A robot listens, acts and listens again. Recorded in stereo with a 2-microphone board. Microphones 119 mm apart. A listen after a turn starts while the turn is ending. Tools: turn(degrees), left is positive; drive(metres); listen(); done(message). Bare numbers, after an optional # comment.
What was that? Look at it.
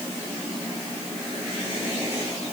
listen()
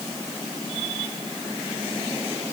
listen()
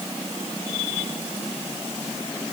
done("I can't make out anything.")